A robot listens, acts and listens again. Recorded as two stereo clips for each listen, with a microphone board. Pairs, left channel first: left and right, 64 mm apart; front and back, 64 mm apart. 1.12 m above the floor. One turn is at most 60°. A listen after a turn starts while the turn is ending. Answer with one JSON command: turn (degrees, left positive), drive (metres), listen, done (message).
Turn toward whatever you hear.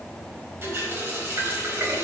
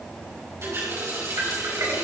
{"turn": -60}
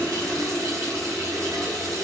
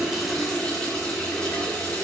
{"turn": -60}
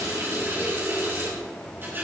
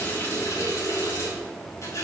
{"turn": -35}
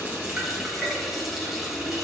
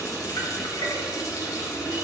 {"done": "Facing the running tap."}